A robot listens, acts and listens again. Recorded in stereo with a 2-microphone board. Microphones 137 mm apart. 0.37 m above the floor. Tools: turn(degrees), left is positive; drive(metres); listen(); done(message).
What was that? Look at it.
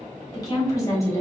turn(degrees=20)
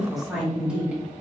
turn(degrees=-10)
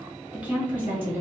turn(degrees=-20)
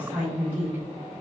turn(degrees=-15)
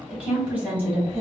turn(degrees=-15)
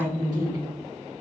done("Facing the woman speaking, 2 to 4 m away.")